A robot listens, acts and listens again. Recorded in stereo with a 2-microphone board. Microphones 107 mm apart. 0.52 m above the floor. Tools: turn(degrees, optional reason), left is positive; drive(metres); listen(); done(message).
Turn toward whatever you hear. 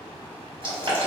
turn(degrees=-50, reason="The boiling: about 50° right or 130° right.")
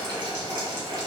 turn(degrees=-60, reason="So it is at 60° right.")
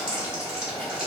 done("Found it: boiling, straight ahead, 1 to 2 m away.")